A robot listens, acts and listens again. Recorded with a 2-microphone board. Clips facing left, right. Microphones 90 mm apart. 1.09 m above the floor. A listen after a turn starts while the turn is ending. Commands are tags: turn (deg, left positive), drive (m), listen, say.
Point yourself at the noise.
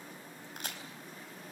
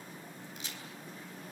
<turn deg="55"/>
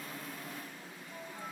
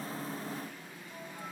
<listen/>
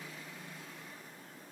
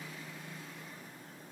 <say>I heard a crack, but can't make it out now. It was about straight ahead or 70° left.</say>